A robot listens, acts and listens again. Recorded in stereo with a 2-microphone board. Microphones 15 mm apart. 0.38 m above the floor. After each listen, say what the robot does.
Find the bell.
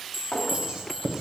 Turn 20° right.
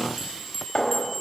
Facing the bell, 2 to 4 m away.